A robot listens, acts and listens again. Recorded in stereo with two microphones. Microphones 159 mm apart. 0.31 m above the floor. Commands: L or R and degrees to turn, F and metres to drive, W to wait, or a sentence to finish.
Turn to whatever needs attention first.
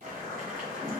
W
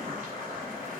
W
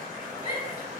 R50
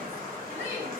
R15
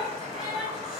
Found it: a shout, straight ahead, 1 to 2 m away.